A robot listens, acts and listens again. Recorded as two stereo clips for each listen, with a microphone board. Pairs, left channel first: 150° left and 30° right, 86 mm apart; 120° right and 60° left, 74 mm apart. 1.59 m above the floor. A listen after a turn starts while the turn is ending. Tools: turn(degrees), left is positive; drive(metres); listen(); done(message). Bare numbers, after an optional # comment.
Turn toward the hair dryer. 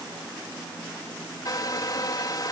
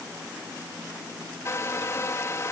# The hair dryer: 170° right.
turn(-170)
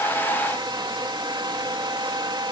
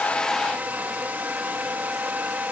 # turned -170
done("Found it: a hair dryer, straight ahead.")